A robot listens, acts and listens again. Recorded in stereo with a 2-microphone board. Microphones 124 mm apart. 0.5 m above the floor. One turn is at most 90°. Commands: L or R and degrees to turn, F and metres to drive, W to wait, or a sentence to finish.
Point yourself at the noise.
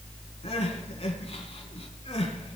L60
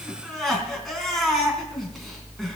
Found it: crying, straight ahead.